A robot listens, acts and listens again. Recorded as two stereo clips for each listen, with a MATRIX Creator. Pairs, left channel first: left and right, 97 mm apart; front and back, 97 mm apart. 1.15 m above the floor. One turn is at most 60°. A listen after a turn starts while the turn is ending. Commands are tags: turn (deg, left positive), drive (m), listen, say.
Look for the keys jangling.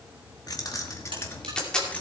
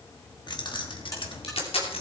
<turn deg="15"/>
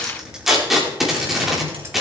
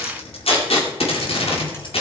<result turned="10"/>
<turn deg="-25"/>
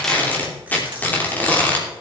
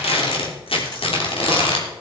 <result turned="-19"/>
<turn deg="-10"/>
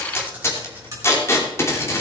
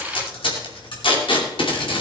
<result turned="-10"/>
<turn deg="-15"/>
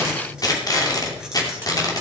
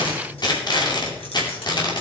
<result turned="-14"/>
<listen/>
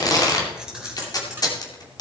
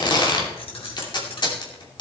<say>Facing the keys jangling.</say>